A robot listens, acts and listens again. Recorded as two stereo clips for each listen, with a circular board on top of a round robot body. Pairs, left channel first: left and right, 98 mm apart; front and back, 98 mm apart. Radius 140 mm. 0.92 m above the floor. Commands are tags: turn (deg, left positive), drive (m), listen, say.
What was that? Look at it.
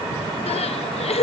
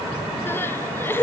<turn deg="70"/>
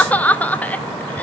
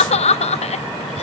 <turn deg="15"/>
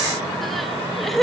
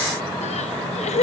<say>Found it: crying, straight ahead, under 1 m away.</say>